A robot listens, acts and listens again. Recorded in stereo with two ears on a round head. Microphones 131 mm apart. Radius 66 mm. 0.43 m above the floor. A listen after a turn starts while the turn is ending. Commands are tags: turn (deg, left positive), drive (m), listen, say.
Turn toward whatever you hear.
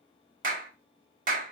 <turn deg="-60"/>
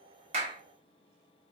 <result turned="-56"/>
<listen/>
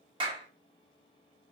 <turn deg="-40"/>
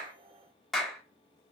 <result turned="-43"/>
<say>Facing the clap.</say>